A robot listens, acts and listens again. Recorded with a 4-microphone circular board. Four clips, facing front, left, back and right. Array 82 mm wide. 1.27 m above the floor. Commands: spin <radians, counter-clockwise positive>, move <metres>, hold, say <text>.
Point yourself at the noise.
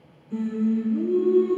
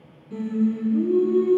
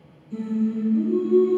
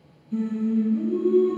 spin 0.96
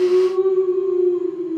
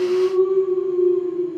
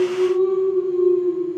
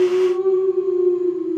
spin -0.17
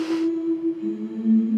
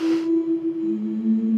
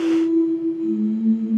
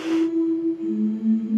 spin -0.17
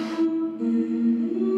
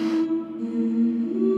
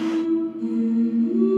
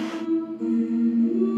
spin -0.17
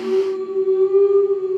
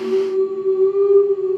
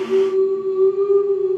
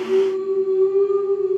say Facing the singing, over 4 m away.